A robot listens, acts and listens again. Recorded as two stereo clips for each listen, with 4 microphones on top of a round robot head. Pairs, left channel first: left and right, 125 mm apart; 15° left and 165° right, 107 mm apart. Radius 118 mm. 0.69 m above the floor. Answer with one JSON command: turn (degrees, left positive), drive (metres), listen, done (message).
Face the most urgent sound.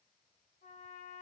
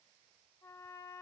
{"listen": true}
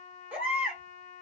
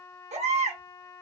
{"turn": -170}
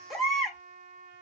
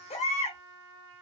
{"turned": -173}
{"done": "Found it: a baby crying, straight ahead, 2 to 4 m away."}